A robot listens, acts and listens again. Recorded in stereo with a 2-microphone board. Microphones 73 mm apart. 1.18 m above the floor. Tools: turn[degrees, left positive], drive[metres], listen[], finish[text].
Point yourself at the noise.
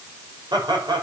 Thought: The laughter: about 70° right or 110° right.
Action: turn[-70]
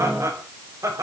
Thought: So it is at 45° right.
Action: turn[-45]
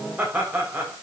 Thought: The laughter is now 25° right.
Action: turn[-25]
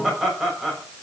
Action: finish[Found it: laughter, straight ahead, over 4 m away.]